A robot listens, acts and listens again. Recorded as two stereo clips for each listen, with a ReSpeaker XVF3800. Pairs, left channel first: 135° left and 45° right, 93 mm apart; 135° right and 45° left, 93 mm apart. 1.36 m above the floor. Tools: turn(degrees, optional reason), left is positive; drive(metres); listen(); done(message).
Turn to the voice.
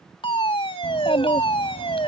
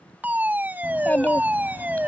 turn(degrees=150, reason="The child speaking: 150° left.")
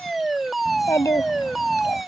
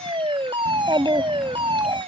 turn(degrees=80, reason="The child speaking is now 80° left.")
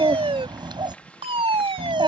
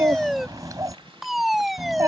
done("Facing the child speaking.")